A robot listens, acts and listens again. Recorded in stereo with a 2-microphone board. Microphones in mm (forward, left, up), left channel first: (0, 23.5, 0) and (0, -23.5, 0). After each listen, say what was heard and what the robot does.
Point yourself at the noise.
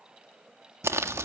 Turn 90° right.
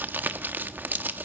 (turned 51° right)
So it is at 45° right. Turn 45° right.
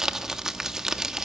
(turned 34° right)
The crumpling is now 15° right. Turn 15° right.
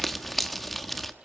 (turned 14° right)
Found it: crumpling, straight ahead, 1 to 2 m away.